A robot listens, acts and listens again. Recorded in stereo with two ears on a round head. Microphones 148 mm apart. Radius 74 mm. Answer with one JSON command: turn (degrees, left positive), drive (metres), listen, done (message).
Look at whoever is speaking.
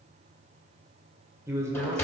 {"turn": -20}
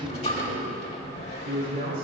{"turn": -125}
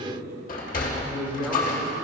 {"done": "Found it: a man speaking, straight ahead."}